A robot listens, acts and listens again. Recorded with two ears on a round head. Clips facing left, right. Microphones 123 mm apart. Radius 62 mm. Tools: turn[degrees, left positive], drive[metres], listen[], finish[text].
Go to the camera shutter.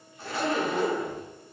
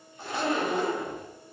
Action: listen[]
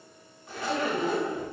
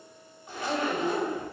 Action: listen[]
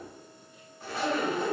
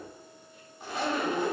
Action: finish[I can't make out a camera shutter to turn to.]